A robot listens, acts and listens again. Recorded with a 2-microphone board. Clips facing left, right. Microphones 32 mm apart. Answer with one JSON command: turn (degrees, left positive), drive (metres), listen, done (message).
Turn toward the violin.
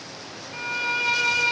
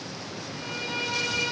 {"turn": 75}
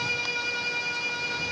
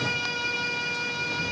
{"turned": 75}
{"done": "Facing the violin."}